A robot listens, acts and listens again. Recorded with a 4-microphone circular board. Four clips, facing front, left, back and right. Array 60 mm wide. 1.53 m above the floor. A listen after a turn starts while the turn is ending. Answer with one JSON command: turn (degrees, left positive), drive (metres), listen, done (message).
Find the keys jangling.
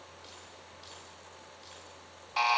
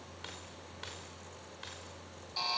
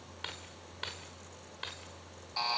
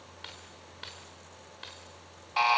{"turn": -175}
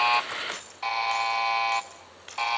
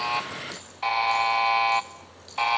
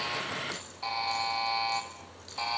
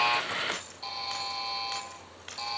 {"turn": -45}
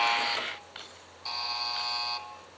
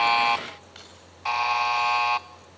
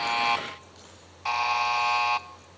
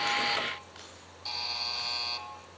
{"turn": 15}
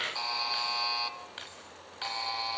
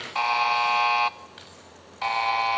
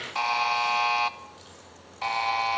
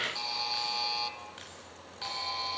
{"done": "Found it: keys jangling, straight ahead."}